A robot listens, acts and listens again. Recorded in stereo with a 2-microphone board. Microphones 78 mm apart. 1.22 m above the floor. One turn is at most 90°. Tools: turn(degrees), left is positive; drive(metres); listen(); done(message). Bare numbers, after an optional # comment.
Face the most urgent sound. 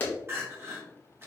# The crying: about 30° right or 150° right.
turn(-30)
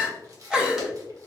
# So it is at 10° right.
turn(-10)
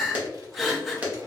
done("Facing the crying, 1 to 2 m away.")